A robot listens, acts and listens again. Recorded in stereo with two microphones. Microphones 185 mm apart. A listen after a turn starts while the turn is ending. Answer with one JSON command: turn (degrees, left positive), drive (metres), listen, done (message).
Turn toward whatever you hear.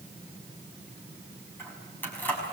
{"turn": 30}
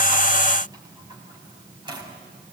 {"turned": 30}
{"turn": -25}
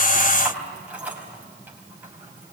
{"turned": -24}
{"turn": -10}
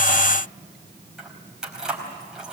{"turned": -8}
{"done": "Found it: keys jangling, straight ahead, over 4 m away."}